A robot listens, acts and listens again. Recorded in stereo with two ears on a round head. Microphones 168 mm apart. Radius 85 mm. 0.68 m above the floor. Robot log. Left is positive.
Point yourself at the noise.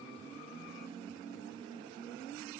cmd idle
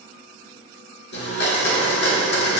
note: The blender: about 65° left or 115° left.
cmd yaw +65
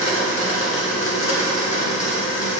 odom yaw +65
note: So it is at 45° left.
cmd yaw +45
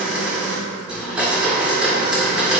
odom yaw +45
end: Found it: a blender, straight ahead.